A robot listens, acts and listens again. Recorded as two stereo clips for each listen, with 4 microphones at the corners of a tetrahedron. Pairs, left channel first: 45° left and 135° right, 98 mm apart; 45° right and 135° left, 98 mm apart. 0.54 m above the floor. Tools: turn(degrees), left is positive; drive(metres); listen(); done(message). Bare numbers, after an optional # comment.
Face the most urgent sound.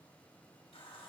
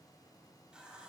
listen()
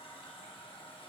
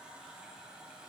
listen()
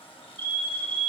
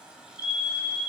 # The fire alarm: 20° right.
turn(-20)
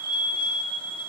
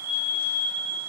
done("Found it: a fire alarm, straight ahead.")